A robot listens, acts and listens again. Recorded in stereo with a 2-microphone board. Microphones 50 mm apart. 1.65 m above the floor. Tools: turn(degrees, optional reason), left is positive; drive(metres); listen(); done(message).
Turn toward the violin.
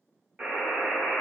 listen()
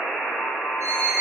turn(degrees=-65, reason="The violin: about 65° right or 115° right.")
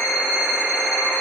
done("Facing the violin.")